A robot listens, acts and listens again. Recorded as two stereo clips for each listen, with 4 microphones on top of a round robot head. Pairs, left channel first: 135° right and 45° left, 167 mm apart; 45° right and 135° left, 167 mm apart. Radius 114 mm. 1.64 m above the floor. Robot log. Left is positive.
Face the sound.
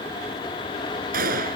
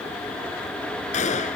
end: Facing the gunshot.